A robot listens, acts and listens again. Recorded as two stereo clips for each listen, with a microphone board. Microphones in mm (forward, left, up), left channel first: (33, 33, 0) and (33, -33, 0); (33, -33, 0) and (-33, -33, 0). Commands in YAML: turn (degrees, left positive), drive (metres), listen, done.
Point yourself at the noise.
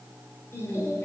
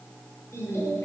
turn: 40
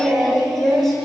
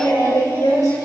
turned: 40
done: "Found it: singing, straight ahead, over 4 m away."